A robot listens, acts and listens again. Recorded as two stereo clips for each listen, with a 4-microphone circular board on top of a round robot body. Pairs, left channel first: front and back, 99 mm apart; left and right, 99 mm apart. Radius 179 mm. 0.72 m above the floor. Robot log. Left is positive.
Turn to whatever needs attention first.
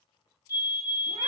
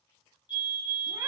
note: The fire alarm: 130° left.
cmd yaw +130
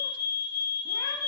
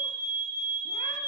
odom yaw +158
note: The fire alarm is now 30° right.
cmd yaw -30
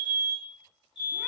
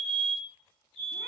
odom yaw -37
note: The fire alarm is now 10° left.
cmd yaw +10
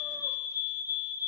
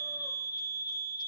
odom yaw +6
end: Facing the fire alarm.